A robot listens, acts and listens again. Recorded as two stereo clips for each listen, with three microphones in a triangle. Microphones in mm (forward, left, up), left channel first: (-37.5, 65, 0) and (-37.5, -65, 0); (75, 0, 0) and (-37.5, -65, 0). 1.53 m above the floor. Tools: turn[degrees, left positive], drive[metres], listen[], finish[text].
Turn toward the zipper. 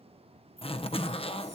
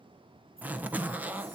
Thought: The zipper: 135° left.
Action: turn[135]
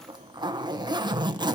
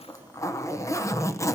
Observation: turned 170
Thought: The zipper is now 35° right.
Action: turn[-35]
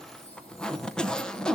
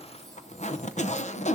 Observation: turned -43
Action: finish[Found it: a zipper, straight ahead, under 1 m away.]